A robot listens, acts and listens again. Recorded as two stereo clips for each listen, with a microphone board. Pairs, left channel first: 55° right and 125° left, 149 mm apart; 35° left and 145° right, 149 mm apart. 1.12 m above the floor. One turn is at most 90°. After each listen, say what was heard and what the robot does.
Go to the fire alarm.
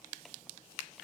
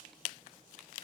Keep listening.
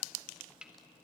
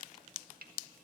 Keep listening.
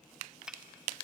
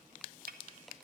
I can't make out a fire alarm to turn to.